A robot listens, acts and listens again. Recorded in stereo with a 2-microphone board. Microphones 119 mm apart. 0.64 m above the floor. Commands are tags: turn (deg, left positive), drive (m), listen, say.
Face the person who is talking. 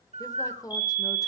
<turn deg="30"/>
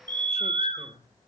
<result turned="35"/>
<turn deg="110"/>
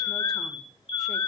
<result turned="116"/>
<listen/>
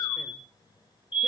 <listen/>
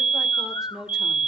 <say>Found it: a woman speaking, straight ahead, 1 to 2 m away.</say>